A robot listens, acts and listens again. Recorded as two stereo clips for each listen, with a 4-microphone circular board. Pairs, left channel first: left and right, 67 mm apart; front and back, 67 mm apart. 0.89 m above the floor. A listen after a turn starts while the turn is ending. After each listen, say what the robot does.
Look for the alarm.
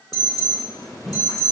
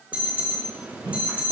Turn 110° left.
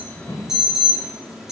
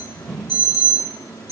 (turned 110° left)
Turn 10° right.
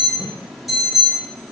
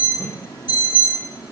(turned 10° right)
Facing the alarm, 2 to 4 m away.